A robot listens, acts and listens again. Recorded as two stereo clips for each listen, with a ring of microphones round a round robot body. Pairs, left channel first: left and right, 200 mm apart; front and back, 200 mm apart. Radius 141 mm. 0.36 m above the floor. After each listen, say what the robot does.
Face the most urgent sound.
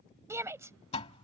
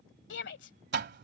Turn 15° right.
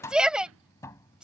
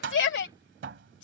Found it: a shout, straight ahead.